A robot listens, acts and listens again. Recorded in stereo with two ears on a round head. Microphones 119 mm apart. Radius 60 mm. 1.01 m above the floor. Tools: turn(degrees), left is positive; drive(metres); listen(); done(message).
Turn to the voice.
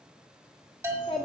turn(degrees=40)
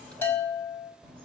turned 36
turn(degrees=10)
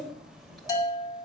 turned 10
done("Facing the child speaking, 2 to 4 m away.")